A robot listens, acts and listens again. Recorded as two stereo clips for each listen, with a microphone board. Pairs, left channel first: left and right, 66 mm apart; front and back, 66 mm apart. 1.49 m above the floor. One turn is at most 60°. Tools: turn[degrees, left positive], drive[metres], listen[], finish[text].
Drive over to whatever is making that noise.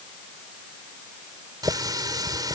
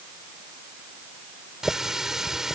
Thought: The running tap: 95° right.
Action: turn[-60]
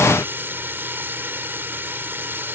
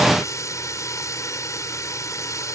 Thought: The running tap is now 35° right.
Action: turn[-35]
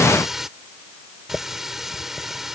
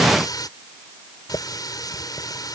Action: drive[1.0]
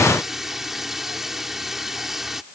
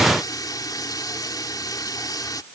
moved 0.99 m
Action: drive[1.0]
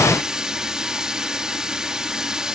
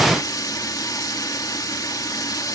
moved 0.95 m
Thought: The running tap is now 10° right.
Action: turn[-10]
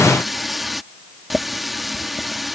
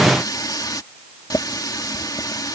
Action: drive[1.0]
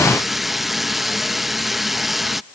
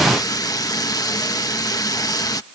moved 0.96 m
Action: drive[1.0]
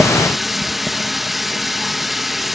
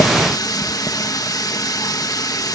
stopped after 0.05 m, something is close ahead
Action: finish[I am next to the running tap.]